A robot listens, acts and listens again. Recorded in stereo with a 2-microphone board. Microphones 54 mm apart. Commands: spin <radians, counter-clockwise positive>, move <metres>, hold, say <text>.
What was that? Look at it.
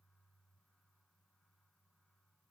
hold
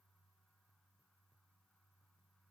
hold
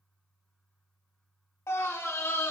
spin 1.05
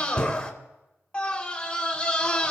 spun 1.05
spin 0.35
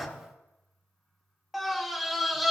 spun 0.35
say Found it: a scream, straight ahead.